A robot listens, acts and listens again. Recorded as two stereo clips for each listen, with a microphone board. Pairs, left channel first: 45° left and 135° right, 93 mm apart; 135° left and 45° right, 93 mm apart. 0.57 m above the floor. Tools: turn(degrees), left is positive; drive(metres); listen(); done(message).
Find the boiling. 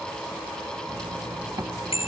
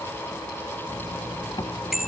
listen()
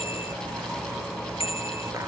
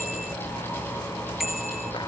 listen()
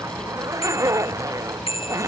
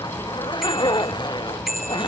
done("I can't make out boiling, only a zipper and a bicycle bell.")